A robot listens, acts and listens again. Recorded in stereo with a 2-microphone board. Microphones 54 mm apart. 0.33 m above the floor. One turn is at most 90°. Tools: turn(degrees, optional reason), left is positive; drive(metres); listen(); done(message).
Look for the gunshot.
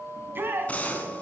turn(degrees=25, reason="The gunshot: about 25° left or 155° left.")
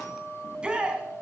listen()
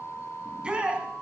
done("I heard a gunshot, but can't make it out now. It was about straight ahead or 130° left.")